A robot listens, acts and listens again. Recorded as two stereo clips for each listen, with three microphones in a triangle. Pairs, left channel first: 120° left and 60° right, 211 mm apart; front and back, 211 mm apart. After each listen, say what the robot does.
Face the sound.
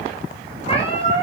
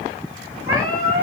Turn 175° right.
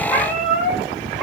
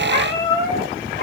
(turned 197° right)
Turn 30° left.
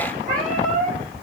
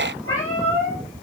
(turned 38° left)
Turn 10° right.
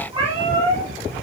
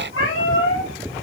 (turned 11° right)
Facing the cat meowing, over 4 m away.